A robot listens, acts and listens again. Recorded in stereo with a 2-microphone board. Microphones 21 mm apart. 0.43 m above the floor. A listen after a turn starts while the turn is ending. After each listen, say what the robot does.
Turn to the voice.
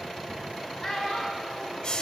Turn 30° left.
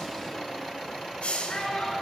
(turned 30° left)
Turn 150° left.
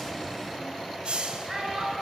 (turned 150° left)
Turn 15° right.
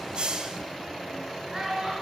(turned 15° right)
Facing the child speaking, 2 to 4 m away.